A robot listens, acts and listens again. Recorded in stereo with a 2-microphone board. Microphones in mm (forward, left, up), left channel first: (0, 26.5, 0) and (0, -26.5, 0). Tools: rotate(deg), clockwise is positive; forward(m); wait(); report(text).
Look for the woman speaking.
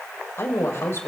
rotate(-55)
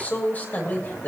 rotate(-40)
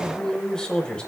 rotate(-20)
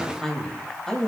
rotate(-15)
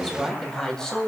rotate(-15)
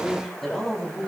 report("Facing the woman speaking, 2 to 4 m away.")